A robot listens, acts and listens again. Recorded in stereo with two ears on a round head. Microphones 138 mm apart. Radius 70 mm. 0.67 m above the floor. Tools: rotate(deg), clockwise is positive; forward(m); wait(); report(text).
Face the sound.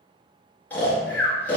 rotate(-30)
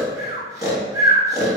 rotate(20)
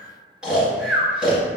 report("Found it: snoring, straight ahead, 1 to 2 m away.")